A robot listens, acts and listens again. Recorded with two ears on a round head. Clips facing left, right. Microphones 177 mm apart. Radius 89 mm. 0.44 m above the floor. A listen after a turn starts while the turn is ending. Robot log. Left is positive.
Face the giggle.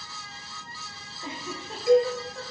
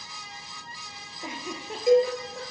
cmd yaw -30
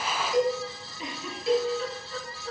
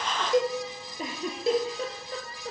note: So it is at 135° right.
cmd yaw -135
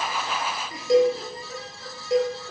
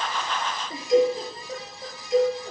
note: The giggle is now 25° right.
cmd yaw -25
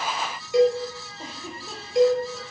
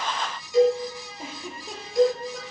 note: The giggle is now 10° right.
cmd yaw -10
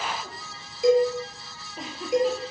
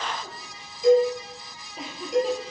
end: Found it: a giggle, straight ahead.